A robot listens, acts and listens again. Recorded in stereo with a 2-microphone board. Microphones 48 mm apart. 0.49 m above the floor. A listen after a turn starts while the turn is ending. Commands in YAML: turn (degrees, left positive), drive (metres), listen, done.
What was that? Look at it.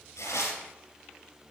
turn: 90
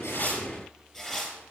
turn: 10
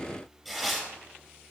done: "Found it: tearing paper, straight ahead."